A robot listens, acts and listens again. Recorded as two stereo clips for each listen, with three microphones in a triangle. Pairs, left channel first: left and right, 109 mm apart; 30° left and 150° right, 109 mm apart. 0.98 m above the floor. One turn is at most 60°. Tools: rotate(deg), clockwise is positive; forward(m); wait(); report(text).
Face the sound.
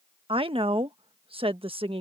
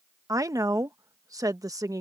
rotate(60)
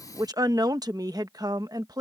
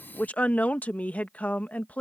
rotate(45)
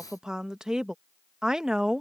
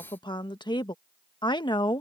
report("Found it: a woman speaking, straight ahead.")